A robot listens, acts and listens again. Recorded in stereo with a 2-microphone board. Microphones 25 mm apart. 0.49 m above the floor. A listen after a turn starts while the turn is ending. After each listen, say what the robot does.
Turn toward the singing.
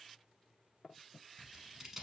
Keep listening.
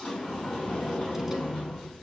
Keep listening.
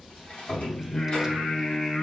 Turn 25° left.
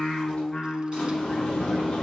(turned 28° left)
Turn 20° left.
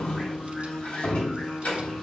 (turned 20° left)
Found it: singing, straight ahead.